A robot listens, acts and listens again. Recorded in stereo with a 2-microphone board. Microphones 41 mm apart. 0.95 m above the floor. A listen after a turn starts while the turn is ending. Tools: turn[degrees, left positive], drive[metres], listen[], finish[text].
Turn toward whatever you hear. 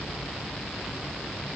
Action: listen[]
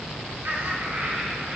Thought: The laughter: about 55° right or 125° right.
Action: turn[-55]
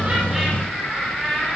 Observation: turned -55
Action: finish[Found it: laughter, straight ahead, over 4 m away.]